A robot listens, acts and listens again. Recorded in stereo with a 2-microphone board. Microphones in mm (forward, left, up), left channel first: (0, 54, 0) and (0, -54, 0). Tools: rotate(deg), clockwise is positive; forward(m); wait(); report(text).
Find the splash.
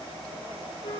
wait()
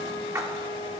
rotate(25)
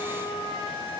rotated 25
wait()
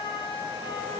report("I heard a splash, but can't make it out now. It was about straight ahead or 130° right.")